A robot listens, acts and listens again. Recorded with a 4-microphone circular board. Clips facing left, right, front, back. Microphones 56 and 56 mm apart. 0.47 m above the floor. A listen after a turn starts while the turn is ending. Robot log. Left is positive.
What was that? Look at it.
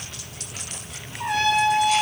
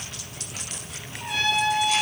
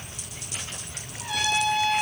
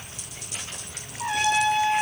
note: The trumpet: 125° left.
cmd yaw +125
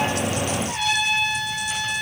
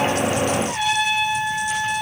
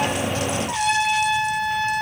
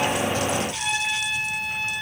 note: The trumpet is now 15° right.
cmd yaw -15
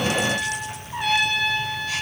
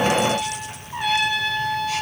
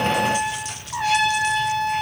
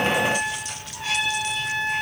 end: Found it: a trumpet, straight ahead.